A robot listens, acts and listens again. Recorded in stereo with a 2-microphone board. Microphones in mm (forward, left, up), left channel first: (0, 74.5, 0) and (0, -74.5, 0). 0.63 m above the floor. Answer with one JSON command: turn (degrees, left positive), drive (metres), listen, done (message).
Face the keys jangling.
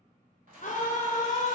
{"turn": -70}
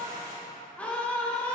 {"turn": -25}
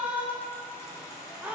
{"turn": 25}
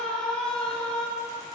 {"listen": true}
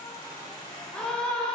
{"turn": 25}
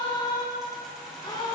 {"done": "Found it: keys jangling, straight ahead, 2 to 4 m away."}